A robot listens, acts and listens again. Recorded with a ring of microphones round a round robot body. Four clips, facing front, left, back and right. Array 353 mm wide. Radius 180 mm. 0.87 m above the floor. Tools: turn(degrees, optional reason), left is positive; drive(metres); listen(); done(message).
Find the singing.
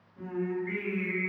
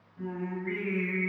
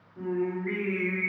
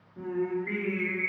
turn(degrees=-120, reason="The singing: 120° right.")
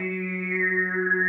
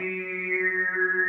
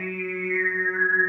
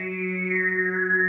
turn(degrees=-25, reason="The singing is now 25° right.")
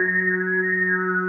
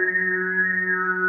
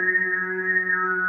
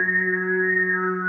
turn(degrees=15, reason="The singing is now 15° left.")
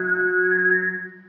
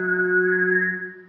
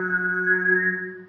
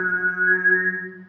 turn(degrees=15, reason="The singing is now 15° left.")
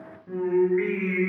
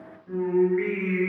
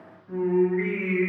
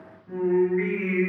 turn(degrees=25, reason="The singing is now 25° left.")
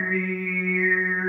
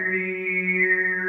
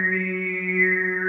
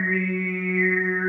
turn(degrees=10, reason="The singing is now 10° left.")
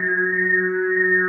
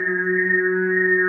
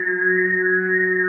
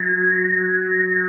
done("Facing the singing, 1 to 2 m away.")